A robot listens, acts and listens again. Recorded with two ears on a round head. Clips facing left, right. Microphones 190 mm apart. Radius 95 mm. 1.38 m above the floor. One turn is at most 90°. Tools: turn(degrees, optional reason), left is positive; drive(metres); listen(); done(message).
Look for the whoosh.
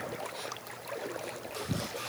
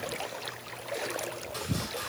listen()
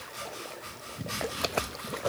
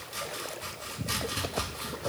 listen()
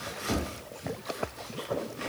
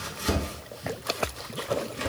done("I can't make out a whoosh to turn to.")